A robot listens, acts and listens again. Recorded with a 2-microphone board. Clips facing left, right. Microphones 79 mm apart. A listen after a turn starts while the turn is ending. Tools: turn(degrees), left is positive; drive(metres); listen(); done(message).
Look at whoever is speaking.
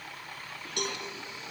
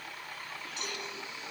listen()
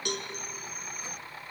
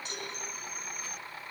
listen()
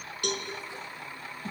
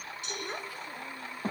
turn(degrees=-55)
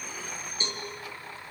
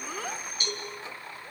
listen()
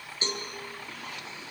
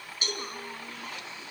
listen()
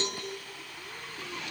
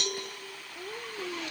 turn(degrees=-60)
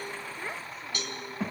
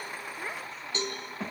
done("Found it: a child speaking, straight ahead.")